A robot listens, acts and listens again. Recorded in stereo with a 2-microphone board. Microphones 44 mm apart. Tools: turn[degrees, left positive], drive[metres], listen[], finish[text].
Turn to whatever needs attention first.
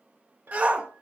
Thought: The shout: about 35° right or 145° right.
Action: turn[-35]
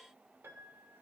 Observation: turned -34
Action: listen[]
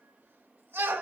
Thought: So it is at 110° right.
Action: turn[-110]
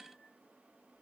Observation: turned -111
Action: listen[]
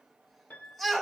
Action: finish[Facing the shout.]